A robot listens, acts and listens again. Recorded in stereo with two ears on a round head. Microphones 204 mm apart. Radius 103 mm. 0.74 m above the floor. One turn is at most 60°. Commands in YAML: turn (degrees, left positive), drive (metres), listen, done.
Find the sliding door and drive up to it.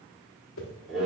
listen: true
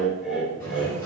turn: 30
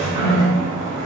turn: -15
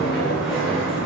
drive: 1.0
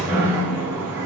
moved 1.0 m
turn: -10
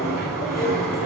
drive: 1.0
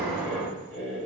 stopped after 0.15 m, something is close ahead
done: "I am next to the sliding door."